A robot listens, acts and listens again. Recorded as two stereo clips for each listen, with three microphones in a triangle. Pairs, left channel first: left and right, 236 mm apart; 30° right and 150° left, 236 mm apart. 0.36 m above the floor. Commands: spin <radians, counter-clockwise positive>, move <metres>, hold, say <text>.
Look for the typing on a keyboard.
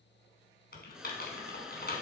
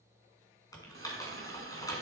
spin 0.79
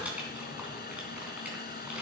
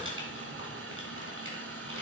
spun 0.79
say Facing the typing on a keyboard, 2 to 4 m away.